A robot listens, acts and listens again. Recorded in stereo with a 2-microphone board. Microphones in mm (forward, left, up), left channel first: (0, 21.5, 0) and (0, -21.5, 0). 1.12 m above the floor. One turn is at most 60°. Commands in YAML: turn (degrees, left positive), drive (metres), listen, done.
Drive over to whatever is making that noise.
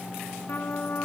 turn: 50
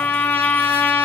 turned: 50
turn: 60
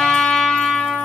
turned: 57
turn: 20
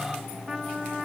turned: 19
drive: 1.0
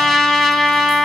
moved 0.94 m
drive: 1.0
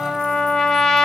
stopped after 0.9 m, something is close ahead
turn: 15
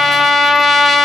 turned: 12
done: "Arrived at the trumpet, straight ahead."